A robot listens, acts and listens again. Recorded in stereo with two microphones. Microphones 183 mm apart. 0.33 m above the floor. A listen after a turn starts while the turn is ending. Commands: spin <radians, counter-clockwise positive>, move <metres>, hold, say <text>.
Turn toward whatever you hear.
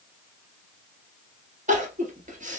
spin -0.79
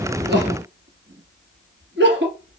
spin -1.66
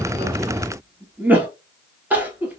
spin -0.17
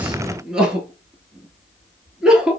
say Found it: crying, straight ahead.